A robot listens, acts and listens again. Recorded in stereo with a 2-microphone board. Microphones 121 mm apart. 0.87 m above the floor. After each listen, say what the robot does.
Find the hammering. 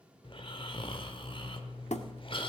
Turn 65° left.
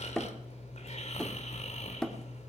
Found it: hammering, straight ahead.